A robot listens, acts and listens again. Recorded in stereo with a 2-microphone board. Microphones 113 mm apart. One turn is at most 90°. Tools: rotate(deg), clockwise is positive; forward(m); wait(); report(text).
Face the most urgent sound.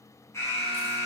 rotate(-25)
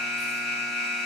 report("Found it: an alarm, straight ahead, 2 to 4 m away.")